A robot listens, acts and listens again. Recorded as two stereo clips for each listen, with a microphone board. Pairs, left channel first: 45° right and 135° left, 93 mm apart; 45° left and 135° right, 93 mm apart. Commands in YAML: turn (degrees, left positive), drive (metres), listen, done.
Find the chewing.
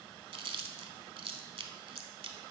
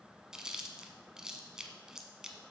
turn: 145
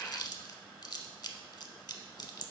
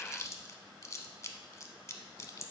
turn: -10
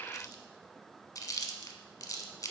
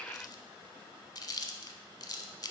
done: "Found it: chewing, straight ahead."